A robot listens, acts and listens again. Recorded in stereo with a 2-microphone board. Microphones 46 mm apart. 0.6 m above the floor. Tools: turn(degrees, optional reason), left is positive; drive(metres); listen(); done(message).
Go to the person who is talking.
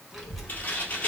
turn(degrees=30)
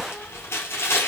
turn(degrees=150, reason="So it is at 150° left.")
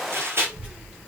turn(degrees=-25, reason="The child speaking is now 25° right.")
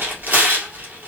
drive(metres=1.0)
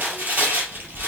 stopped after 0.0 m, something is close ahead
done("Blocked. The child speaking is further on, straight ahead.")